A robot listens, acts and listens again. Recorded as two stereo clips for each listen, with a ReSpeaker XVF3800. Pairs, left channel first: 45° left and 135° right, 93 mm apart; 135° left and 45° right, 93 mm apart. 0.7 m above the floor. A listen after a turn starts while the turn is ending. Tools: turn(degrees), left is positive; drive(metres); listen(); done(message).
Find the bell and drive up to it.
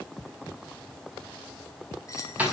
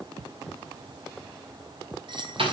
turn(degrees=-10)
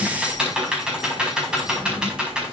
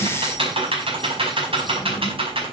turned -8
listen()
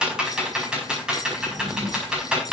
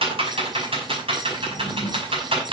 listen()
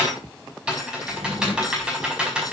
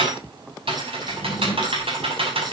done("Facing where the bell came from. I can't hear it now. I did not reach it.")